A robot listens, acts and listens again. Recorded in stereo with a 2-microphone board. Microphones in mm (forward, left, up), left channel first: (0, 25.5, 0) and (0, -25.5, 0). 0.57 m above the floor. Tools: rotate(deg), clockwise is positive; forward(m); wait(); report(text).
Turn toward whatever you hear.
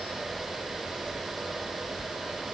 wait()
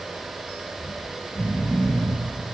rotate(-90)
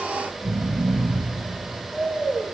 report("Found it: snoring, straight ahead, 2 to 4 m away.")